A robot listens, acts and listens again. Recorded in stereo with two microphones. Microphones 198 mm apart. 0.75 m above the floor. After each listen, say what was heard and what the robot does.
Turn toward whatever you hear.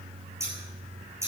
Turn 30° right.
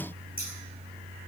Keep listening.
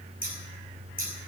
So it is at 135° right. Turn 135° right.
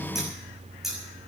Found it: scissors, straight ahead, over 4 m away.